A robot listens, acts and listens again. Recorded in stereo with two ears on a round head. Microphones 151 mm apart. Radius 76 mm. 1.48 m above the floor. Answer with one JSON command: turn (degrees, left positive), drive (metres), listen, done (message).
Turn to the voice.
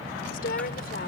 {"turn": 60}
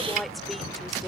{"done": "Facing the woman speaking."}